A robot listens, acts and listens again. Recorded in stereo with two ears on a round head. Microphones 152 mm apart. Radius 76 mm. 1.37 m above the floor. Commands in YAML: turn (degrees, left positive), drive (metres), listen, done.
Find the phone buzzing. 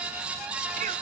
listen: true
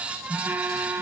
turn: -30
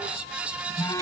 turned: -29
turn: 20
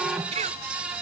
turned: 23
listen: true
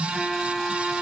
done: "Facing the phone buzzing."